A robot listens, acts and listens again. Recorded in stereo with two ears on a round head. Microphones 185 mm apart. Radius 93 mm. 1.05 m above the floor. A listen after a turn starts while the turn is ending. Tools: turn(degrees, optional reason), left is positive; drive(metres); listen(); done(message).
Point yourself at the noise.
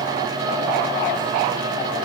listen()
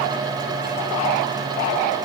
listen()
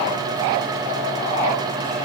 done("I can't make out anything.")